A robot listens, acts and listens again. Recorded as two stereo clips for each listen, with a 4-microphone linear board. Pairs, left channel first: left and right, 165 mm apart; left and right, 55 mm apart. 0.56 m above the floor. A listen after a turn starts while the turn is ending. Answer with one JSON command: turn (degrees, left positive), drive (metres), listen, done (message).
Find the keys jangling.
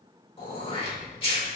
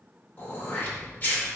{"turn": -15}
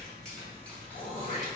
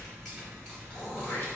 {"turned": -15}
{"turn": 15}
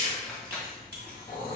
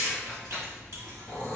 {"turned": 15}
{"turn": 10}
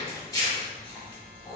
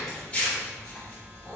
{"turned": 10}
{"turn": 10}
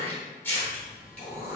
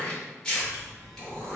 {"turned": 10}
{"done": "Facing the keys jangling."}